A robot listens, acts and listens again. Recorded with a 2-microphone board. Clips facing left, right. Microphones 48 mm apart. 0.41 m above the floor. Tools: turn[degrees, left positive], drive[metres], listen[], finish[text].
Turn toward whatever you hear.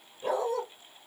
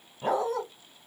Thought: The dog barking: about 60° right or 120° right.
Action: turn[-60]
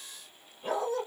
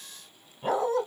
Thought: So it is at 55° right.
Action: turn[-55]
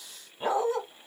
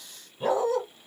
Thought: The dog barking is now 20° left.
Action: turn[20]
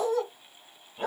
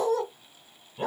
Action: finish[Found it: a dog barking, straight ahead, 1 to 2 m away.]